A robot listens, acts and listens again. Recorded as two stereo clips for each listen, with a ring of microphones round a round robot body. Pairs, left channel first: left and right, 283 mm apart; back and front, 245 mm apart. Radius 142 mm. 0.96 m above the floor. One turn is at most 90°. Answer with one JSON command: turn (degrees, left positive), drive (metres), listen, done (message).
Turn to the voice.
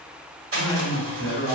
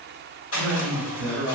{"turn": -20}
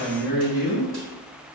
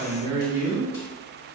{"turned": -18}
{"done": "Facing the man speaking."}